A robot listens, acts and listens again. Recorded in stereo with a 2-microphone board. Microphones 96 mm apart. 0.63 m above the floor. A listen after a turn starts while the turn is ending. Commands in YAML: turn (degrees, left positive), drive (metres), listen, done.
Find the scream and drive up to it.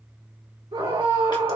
turn: -65
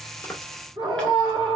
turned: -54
turn: -50
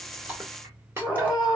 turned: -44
drive: 1.0
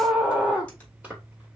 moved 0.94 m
turn: -10
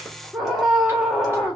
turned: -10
drive: 1.0
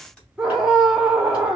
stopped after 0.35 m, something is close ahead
done: "I am next to the scream."